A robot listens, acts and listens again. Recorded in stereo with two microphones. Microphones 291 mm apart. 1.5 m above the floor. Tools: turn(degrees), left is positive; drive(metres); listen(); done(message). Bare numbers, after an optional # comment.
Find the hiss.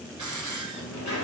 turn(-90)
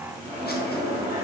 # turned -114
# Nothing new. It was at 25° left.
turn(25)
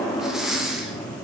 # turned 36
done("Found it: a hiss, straight ahead.")